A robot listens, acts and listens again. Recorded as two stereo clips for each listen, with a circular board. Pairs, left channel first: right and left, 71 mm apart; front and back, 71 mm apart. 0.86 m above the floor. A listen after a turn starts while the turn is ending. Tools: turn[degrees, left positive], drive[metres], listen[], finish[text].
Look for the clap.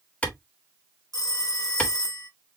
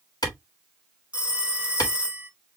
Thought: The clap: 20° right.
Action: turn[-20]
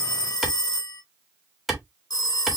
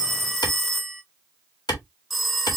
Action: finish[Found it: a clap, straight ahead.]